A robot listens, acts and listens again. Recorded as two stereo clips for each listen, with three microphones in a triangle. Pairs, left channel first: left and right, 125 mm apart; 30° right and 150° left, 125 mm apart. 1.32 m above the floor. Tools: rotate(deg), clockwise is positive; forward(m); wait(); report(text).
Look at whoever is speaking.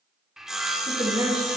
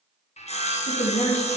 rotate(35)
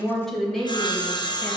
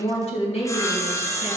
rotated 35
report("Found it: a woman speaking, straight ahead.")